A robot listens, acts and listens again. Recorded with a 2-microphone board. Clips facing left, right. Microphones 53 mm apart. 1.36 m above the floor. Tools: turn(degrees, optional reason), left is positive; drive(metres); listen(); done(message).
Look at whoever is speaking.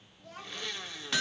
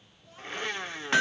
turn(degrees=90)
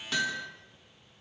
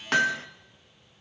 listen()
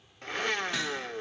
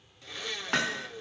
listen()
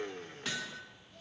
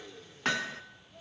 turn(degrees=-10, reason="The child speaking is now 10° right.")
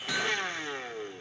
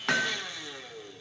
listen()
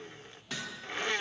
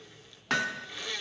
listen()
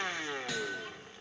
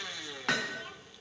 done("I heard a child speaking from this way, but can't make it out now.")